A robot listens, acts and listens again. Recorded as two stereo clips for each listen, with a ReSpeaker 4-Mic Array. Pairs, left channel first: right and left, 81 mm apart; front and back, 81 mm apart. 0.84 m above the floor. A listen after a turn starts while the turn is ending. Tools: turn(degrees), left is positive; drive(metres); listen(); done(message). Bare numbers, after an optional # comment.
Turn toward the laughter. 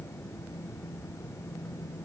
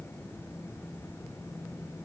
listen()
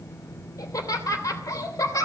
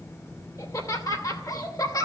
# The laughter: 40° right.
turn(-40)
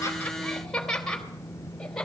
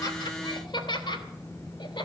done("Found it: laughter, straight ahead, 2 to 4 m away.")